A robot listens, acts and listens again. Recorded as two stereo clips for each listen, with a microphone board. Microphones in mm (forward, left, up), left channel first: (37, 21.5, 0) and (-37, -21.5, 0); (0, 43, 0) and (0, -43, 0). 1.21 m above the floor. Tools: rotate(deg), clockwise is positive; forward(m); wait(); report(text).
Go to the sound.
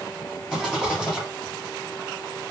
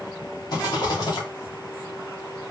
rotate(-130)
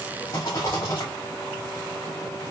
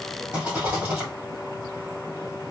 rotate(10)
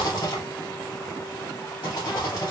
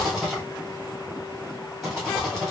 forward(1.0)
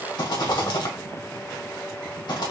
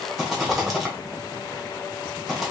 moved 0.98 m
forward(1.0)
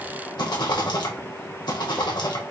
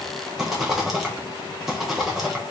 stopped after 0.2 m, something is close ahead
report("I am next to the rattle.")